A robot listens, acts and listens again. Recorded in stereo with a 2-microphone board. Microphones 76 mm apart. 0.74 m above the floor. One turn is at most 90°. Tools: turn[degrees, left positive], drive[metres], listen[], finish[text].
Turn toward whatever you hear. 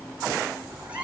Thought: The cat meowing: about 15° right or 165° right.
Action: turn[-15]
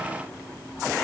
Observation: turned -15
Action: listen[]
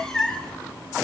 Action: turn[30]
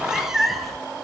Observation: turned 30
Action: finish[Facing the cat meowing.]